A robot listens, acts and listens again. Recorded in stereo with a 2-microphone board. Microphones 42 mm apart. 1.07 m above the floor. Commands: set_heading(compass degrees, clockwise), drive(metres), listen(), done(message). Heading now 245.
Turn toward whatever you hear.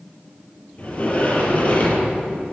set_heading(205)
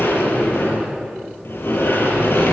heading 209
set_heading(104)
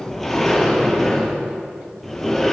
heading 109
done("Found it: a sliding door, straight ahead.")